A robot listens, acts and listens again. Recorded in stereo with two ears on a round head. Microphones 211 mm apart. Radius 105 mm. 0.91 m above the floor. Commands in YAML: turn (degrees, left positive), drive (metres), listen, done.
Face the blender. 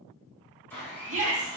turn: 30
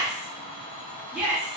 turn: 140
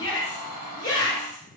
turn: -30
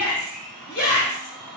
done: "Found it: a blender, straight ahead."